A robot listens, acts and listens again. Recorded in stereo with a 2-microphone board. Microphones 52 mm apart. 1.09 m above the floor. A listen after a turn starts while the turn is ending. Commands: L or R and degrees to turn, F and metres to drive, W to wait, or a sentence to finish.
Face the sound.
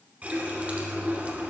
R25
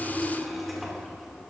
Facing the running tap, 2 to 4 m away.